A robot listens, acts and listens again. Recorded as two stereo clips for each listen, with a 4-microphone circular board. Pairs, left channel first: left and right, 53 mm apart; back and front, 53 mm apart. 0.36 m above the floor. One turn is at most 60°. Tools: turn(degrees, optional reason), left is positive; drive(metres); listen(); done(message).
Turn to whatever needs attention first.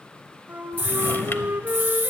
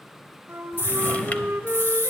turn(degrees=-60, reason="The scream: 140° right.")
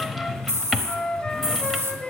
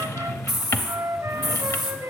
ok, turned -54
turn(degrees=-60, reason="The scream is now 85° right.")
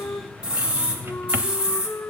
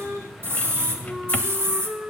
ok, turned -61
turn(degrees=-25, reason="The scream is now 25° right.")
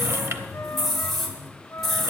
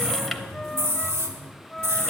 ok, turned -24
done("Found it: a scream, straight ahead.")